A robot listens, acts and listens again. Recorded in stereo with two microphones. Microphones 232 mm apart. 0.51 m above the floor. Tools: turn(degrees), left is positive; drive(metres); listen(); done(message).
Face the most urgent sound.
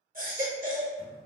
turn(degrees=-40)
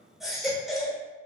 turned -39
done("Facing the baby crying.")